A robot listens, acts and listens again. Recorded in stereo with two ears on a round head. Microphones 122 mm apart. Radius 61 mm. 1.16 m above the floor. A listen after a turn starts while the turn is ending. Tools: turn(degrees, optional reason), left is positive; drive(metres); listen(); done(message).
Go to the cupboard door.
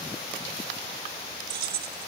listen()
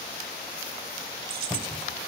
turn(degrees=30)
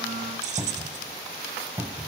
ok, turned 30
turn(degrees=-15, reason="So it is at 15° right.")
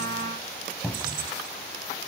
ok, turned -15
drive(metres=1.0)
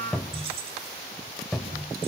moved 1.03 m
drive(metres=1.0)
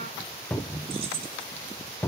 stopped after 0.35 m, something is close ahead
turn(degrees=15, reason="The cupboard door is now 15° left.")
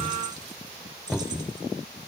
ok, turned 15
done("Arrived at the cupboard door, straight ahead.")